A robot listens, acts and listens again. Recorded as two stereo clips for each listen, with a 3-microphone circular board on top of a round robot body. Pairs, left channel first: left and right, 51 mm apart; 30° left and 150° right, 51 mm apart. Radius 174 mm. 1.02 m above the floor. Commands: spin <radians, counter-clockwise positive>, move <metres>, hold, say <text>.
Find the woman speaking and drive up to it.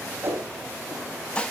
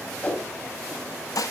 hold
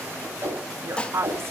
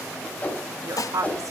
spin -2.36
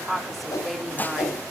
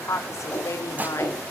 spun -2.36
move 1.0
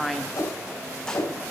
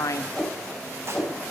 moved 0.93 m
move 1.0
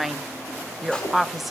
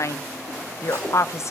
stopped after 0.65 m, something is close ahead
say Arrived at the woman speaking, straight ahead.